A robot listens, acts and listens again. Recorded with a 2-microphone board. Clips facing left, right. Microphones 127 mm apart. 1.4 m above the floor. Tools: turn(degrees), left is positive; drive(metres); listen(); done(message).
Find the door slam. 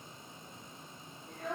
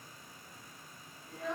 listen()
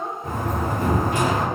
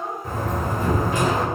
turn(degrees=65)
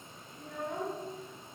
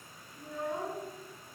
listen()
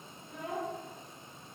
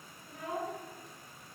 done("I heard a door slam, but can't make it out now. It was about straight ahead or 50° left.")